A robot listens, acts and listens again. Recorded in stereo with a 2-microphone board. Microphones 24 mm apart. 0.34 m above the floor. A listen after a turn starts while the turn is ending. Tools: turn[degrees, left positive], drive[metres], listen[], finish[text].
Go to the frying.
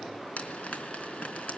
Thought: The frying: about 60° left or 120° left.
Action: turn[60]
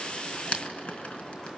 Thought: So it is at 55° left.
Action: turn[55]
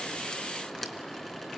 Action: listen[]
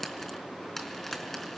Thought: The frying is now 10° left.
Action: turn[10]
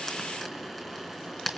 Action: drive[1.0]
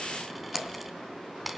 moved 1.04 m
Action: drive[1.0]
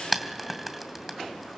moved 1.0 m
Action: drive[1.0]
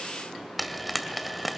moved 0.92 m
Action: drive[1.0]
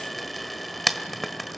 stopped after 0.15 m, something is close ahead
Action: finish[I am next to the frying.]